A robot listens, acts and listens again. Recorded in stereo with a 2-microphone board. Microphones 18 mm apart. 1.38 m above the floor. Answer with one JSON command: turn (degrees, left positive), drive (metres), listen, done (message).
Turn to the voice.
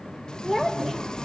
{"turn": 30}
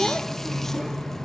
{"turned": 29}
{"listen": true}
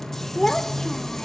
{"turn": 145}
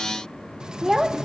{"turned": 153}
{"turn": -15}
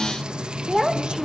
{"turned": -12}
{"done": "Found it: a child speaking, straight ahead, 1 to 2 m away."}